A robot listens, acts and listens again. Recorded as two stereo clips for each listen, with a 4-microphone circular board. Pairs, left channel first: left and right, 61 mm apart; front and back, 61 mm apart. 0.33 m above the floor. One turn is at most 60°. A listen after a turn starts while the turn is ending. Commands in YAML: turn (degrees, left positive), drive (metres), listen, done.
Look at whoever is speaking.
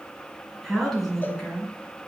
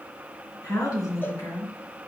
turn: 10
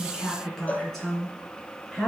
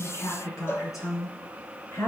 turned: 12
turn: 15
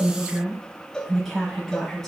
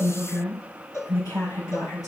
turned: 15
turn: 10
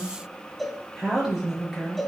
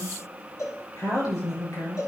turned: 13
done: "Facing the woman speaking, over 4 m away."